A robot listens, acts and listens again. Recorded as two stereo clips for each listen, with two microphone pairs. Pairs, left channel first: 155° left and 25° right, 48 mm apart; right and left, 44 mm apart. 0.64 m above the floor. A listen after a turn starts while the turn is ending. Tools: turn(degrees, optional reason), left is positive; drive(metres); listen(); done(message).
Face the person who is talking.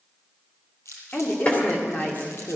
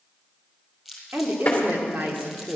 turn(degrees=105, reason="The woman speaking: 105° left.")
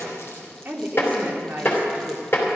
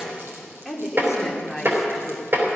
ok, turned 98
done("Facing the woman speaking, 2 to 4 m away.")